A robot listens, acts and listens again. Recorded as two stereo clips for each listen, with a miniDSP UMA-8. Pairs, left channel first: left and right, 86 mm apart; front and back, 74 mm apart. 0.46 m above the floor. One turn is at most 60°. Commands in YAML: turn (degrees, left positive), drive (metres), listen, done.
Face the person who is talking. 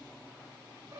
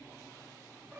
listen: true
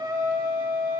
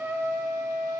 listen: true
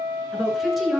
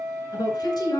done: "Facing the woman speaking."